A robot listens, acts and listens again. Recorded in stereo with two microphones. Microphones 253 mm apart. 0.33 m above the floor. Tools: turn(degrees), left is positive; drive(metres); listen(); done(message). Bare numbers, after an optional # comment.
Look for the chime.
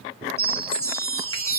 turn(30)
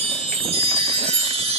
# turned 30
# So it is at 20° right.
turn(-20)
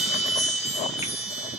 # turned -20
done("Facing the chime, 1 to 2 m away.")